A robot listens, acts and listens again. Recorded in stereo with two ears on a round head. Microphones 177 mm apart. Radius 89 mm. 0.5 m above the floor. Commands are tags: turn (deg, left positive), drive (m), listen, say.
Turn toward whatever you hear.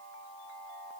<listen/>
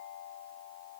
<listen/>
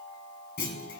<turn deg="55"/>
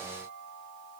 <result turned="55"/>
<listen/>
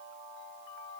<say>I heard a clunk, but can't make it out now. It was about straight ahead or 70° left.</say>